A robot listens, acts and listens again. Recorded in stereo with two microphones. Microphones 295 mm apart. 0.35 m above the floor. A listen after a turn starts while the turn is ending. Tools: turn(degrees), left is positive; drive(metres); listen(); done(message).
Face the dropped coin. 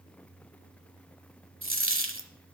turn(degrees=-45)
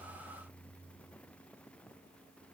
listen()
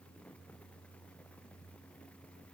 done("I heard a dropped coin, but can't make it out now. It was about straight ahead or 90° right.")